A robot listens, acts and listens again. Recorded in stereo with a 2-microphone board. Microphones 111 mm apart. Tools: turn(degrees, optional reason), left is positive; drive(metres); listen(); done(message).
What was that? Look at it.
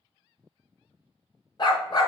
turn(degrees=50, reason="The dog barking: about 50° left or 130° left.")
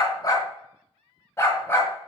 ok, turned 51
turn(degrees=20, reason="So it is at 20° left.")
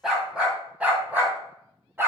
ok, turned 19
turn(degrees=-20, reason="The dog barking is now 20° right.")
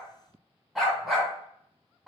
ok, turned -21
done("Found it: a dog barking, straight ahead, 2 to 4 m away.")